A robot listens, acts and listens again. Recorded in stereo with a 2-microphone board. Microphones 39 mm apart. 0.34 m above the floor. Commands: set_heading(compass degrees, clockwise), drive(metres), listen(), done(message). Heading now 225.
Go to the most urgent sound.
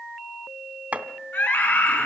set_heading(155)
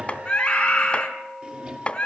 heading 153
set_heading(128)
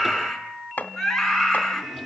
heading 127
drive(1.0)
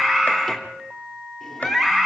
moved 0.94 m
drive(1.0)
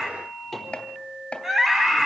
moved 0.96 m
set_heading(137)
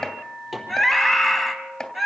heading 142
drive(1.0)
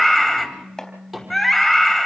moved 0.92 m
drive(1.0)
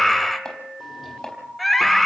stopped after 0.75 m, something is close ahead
set_heading(132)
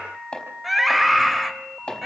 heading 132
done("I am next to the scream.")